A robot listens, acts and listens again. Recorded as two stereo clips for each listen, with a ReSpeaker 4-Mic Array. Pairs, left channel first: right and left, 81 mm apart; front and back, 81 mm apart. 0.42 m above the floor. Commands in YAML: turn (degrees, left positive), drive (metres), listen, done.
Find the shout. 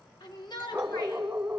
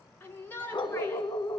turn: -65
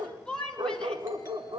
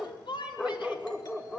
turn: -10
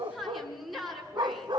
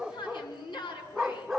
done: "Facing the shout, over 4 m away."